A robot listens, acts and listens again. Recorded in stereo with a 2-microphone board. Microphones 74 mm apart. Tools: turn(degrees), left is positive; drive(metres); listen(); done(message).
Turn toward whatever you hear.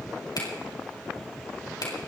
turn(degrees=65)
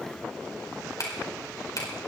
turn(degrees=50)
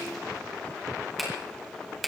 done("Facing the finger snap, over 4 m away.")